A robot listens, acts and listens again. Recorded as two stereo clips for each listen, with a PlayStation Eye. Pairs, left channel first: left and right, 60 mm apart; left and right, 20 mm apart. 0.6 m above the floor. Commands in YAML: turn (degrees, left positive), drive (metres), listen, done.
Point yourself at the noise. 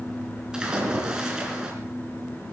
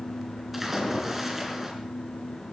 turn: -30
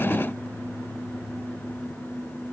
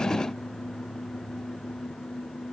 listen: true
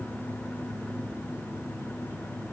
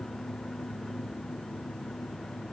done: "I heard a splash, but can't make it out now. It was about 15° left or 135° right."